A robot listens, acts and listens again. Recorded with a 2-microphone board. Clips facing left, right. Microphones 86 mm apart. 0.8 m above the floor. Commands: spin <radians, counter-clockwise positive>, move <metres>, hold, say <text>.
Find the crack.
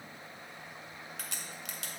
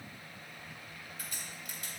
spin 1.22
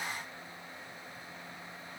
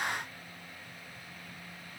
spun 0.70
hold
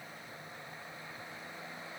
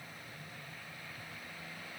say I heard a crack, but can't make it out now. It was about 30° left or 70° left.